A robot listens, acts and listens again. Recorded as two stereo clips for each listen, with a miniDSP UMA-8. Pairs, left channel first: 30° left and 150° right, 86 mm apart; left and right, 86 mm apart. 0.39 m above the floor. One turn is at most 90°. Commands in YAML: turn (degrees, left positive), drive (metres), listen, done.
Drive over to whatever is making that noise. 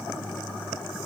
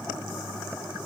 listen: true
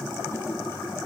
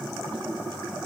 listen: true
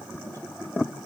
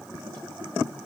done: "I can't make out anything to turn to."